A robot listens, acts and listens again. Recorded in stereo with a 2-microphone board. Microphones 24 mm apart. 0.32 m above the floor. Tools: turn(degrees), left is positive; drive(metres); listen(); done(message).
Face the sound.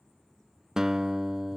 turn(degrees=-25)
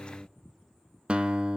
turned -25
turn(degrees=-130)
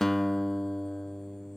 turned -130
turn(degrees=10)
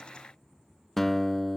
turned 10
turn(degrees=10)
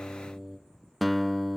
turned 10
done("Found it: a guitar, straight ahead, under 1 m away.")